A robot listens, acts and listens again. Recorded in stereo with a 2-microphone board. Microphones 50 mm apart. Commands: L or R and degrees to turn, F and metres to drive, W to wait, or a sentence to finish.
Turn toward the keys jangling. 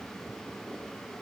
W
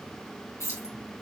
L70
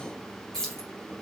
L10
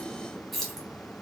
Found it: keys jangling, straight ahead.